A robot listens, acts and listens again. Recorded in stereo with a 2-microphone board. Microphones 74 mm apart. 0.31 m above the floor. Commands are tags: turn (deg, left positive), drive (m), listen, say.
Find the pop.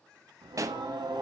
<turn deg="-45"/>
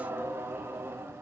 <listen/>
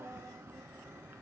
<say>I heard a pop, but can't make it out now. It was about straight ahead or 90° right.</say>